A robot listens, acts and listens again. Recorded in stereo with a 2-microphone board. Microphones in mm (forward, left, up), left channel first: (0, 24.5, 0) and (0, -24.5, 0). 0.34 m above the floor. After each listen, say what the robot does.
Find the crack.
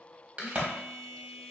Turn 30° right.
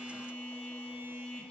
Keep listening.
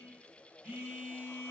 I heard a crack, but can't make it out now. It was about straight ahead or 120° right.